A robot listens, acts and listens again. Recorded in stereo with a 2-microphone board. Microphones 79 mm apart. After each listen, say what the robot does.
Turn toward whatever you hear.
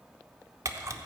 Turn 40° right.
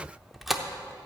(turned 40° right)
Facing the camera shutter.